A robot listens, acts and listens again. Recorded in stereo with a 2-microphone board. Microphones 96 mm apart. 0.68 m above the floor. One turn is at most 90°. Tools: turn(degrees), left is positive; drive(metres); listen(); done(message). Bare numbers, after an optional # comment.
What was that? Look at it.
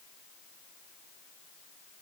listen()
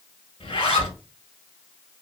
# The zipper: about 75° left or 105° left.
turn(75)
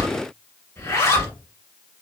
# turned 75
# So it is at 30° left.
turn(30)
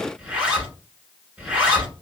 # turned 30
# The zipper is now 10° right.
turn(-10)
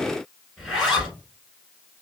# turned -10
done("Found it: a zipper, straight ahead, 1 to 2 m away.")